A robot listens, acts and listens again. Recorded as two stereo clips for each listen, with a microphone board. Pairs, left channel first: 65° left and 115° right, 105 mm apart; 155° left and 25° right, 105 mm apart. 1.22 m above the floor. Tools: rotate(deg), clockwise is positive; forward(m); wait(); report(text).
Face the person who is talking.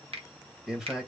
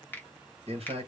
rotate(30)
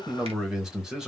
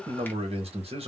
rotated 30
rotate(30)
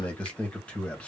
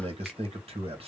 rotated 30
rotate(10)
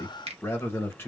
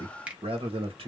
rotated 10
report("Found it: a man speaking, straight ahead.")